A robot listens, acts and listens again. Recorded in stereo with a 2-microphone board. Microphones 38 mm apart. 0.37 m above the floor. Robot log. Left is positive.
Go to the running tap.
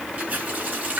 note: The running tap: about 45° right or 135° right.
cmd yaw -45
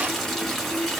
cmd fwd 1.0
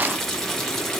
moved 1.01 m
cmd fwd 1.0
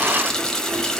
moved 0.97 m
note: The running tap is now 15° left.
cmd yaw +15
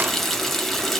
cmd fwd 1.0
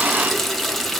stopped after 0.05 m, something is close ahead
end: Arrived at the running tap, straight ahead.